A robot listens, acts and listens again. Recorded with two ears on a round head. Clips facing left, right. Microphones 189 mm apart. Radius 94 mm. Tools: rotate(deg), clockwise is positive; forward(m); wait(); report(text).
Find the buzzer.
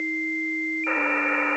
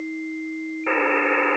rotate(65)
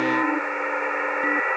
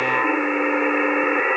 rotate(50)
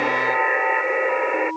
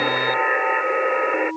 report("Facing the buzzer.")